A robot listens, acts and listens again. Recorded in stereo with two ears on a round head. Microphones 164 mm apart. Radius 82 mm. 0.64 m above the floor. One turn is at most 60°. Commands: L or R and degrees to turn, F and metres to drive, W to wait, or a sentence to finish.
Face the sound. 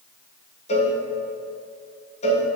L40
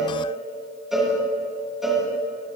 Found it: a cowbell, straight ahead.